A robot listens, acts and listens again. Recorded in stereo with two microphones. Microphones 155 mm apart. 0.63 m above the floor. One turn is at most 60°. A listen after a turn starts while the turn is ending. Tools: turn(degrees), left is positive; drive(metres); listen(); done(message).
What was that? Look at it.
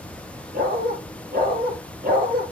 turn(degrees=-60)
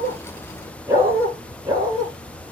turn(degrees=-25)
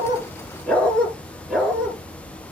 done("Found it: a dog barking, straight ahead.")